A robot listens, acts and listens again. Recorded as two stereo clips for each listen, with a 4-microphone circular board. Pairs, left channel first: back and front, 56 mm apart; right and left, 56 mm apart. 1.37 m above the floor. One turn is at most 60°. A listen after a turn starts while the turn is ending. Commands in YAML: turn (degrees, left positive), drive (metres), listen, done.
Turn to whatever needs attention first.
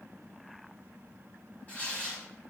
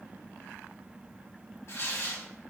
listen: true
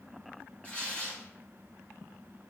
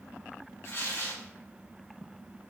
listen: true
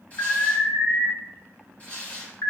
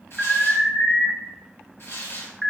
turn: 60
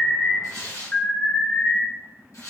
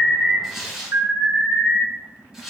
turn: 60
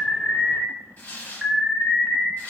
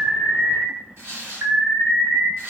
turn: 60
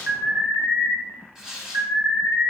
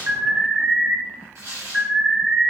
turn: 20
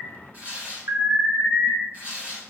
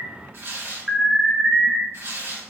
done: "Facing the alarm."